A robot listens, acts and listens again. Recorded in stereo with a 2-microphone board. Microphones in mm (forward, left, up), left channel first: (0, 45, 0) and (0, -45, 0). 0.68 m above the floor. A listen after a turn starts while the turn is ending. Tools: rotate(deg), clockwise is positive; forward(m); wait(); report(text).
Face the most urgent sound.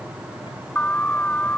rotate(-20)
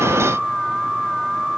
report("Found it: an alarm, straight ahead.")